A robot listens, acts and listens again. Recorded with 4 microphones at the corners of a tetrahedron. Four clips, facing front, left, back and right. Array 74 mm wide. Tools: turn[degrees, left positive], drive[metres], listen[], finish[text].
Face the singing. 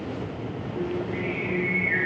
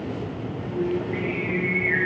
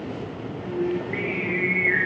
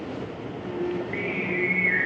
Thought: The singing: 155° right.
Action: turn[-155]
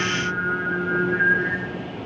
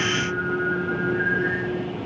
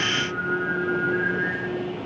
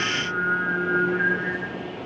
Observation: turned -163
Thought: The singing is now 10° right.
Action: turn[-10]
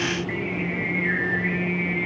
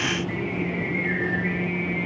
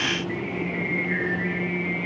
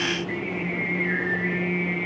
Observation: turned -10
Action: finish[Facing the singing.]